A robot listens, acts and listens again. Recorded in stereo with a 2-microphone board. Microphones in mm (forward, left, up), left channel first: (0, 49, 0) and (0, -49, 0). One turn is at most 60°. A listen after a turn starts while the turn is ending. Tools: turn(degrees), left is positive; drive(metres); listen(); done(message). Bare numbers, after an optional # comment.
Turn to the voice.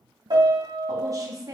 # The woman speaking: about 35° right or 145° right.
turn(-35)
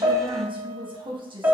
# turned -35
# So it is at 100° right.
turn(-60)
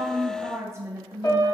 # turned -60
# The woman speaking is now 30° right.
turn(-30)
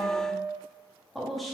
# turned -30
done("Facing the woman speaking, under 1 m away.")